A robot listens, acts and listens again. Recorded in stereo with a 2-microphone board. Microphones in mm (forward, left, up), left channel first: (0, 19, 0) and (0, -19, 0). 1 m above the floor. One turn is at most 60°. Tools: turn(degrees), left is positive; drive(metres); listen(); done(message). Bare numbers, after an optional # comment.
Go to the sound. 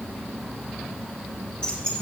# The keys jangling: about 25° left or 155° left.
turn(25)
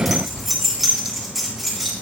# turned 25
drive(1.0)
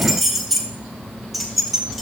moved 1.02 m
drive(1.0)
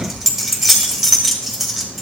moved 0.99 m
drive(1.0)
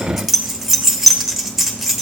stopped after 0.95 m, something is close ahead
done("Arrived at the keys jangling, straight ahead.")